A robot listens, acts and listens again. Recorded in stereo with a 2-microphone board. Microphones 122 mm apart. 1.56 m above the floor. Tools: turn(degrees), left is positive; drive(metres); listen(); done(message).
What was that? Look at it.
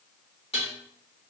turn(degrees=55)
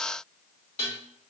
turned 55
turn(degrees=65)
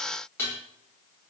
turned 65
turn(degrees=20)
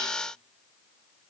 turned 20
listen()
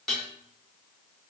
done("Facing the dishes clattering.")